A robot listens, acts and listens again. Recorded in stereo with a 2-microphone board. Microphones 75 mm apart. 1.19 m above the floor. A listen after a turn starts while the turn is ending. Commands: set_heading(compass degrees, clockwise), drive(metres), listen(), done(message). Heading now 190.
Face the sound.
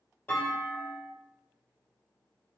set_heading(170)
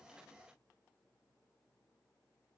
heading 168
listen()
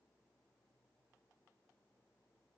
done("I heard a clunk, but can't make it out now. It was about 5° right or 140° left.")